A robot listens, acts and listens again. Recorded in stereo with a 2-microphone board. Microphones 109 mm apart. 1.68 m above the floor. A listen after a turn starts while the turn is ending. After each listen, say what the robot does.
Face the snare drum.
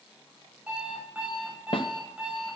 Turn 55° left.
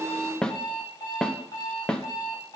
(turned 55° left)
Turn 10° left.
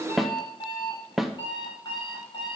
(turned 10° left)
Facing the snare drum.